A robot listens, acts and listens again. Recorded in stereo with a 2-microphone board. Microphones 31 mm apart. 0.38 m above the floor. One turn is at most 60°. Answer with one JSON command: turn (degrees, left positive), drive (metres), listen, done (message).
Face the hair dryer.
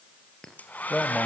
{"turn": 60}
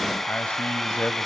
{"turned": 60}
{"done": "Found it: a hair dryer, straight ahead."}